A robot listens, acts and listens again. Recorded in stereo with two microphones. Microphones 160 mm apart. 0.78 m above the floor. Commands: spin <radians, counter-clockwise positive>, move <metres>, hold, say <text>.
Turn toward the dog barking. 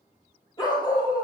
spin 0.52
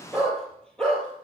say Found it: a dog barking, straight ahead, over 4 m away.